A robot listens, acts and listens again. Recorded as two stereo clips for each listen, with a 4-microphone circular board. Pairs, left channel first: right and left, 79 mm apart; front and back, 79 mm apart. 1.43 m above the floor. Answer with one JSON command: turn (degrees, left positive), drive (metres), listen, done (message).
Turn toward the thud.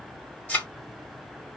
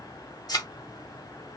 {"turn": -20}
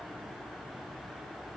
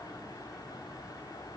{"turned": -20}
{"done": "Facing where the thud came from. I can't hear it now."}